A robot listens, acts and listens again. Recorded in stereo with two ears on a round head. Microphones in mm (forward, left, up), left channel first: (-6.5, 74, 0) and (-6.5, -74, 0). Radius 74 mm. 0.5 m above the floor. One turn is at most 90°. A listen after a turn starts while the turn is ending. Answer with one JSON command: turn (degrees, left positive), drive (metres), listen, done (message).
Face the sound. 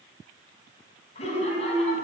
{"turn": 40}
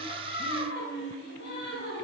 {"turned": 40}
{"turn": 90}
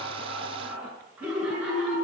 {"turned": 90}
{"turn": -10}
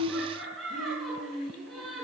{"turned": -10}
{"done": "Facing the laughter."}